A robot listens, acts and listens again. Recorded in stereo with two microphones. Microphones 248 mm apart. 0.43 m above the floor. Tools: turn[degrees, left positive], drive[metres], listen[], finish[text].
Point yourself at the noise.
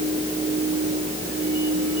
Action: listen[]
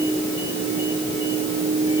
Action: listen[]
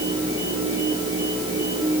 Action: finish[I can't make out anything.]